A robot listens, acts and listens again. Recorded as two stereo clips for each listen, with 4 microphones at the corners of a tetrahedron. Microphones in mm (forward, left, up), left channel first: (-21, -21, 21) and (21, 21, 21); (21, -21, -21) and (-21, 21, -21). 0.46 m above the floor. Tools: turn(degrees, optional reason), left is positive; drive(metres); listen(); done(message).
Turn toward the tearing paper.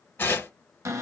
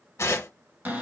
turn(degrees=-85, reason="The tearing paper: 85° right.")
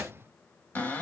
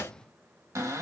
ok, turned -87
done("Facing the tearing paper, under 1 m away.")